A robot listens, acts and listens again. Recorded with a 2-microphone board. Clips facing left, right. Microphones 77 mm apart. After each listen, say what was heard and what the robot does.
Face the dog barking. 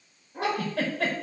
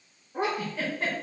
The dog barking: about 15° right or 165° right. Turn 15° right.
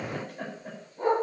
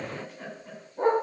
The dog barking: about 35° right or 145° right. Turn 35° right.
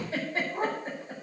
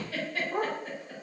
So it is at 115° right. Turn 115° right.
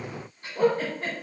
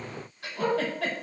The dog barking is now 10° left. Turn 10° left.
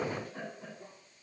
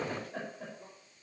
Keep listening.
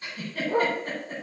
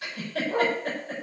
Found it: a dog barking, straight ahead.